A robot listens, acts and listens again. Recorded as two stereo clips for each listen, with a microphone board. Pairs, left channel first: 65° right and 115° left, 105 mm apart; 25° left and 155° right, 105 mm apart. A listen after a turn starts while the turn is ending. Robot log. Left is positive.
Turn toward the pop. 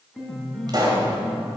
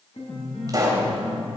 note: The pop: 155° left.
cmd yaw +155
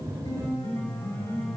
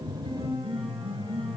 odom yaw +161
end: Facing where the pop came from. I can't hear it now.